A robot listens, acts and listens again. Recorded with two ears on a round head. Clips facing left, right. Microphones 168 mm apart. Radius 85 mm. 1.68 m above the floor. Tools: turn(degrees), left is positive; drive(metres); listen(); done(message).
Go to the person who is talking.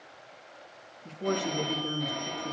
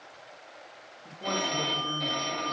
turn(degrees=35)
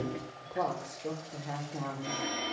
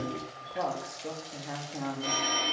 drive(metres=1.0)
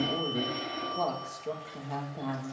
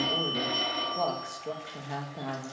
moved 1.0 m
drive(metres=1.0)
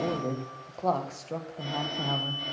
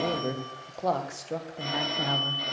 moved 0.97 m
turn(degrees=-10)
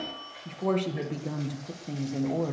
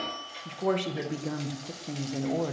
drive(metres=1.0)
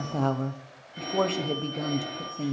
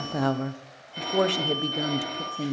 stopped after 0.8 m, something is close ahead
turn(degrees=-15)
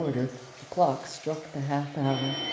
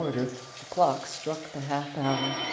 done("I am next to the woman speaking.")